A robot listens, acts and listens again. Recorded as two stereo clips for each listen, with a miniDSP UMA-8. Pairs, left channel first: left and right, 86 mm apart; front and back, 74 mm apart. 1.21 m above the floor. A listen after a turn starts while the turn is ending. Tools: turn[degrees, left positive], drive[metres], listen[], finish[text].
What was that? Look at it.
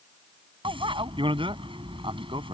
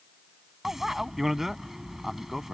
Thought: The bicycle bell: 95° right.
Action: turn[-95]
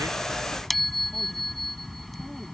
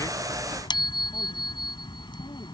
Action: finish[Found it: a bicycle bell, straight ahead.]